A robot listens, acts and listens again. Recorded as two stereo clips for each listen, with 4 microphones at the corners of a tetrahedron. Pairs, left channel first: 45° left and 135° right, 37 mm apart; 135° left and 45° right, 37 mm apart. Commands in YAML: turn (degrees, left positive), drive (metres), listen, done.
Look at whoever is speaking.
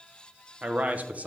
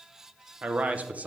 turn: -95
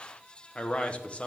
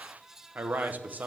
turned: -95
turn: -15
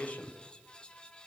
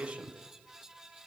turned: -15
done: "Facing the man speaking, under 1 m away."